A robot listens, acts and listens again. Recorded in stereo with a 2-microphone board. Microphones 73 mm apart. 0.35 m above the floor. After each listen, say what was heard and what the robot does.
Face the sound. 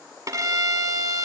The violin: about 50° right or 130° right. Turn 50° right.
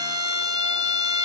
So it is at 80° right. Turn 80° right.
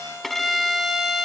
Facing the violin.